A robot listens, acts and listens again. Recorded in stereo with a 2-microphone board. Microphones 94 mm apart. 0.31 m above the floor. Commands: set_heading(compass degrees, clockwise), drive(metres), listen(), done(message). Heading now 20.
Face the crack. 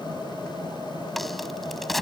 set_heading(350)
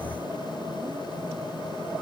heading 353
listen()
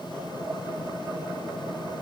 done("I heard a crack, but can't make it out now. It was about 25° right or 150° left.")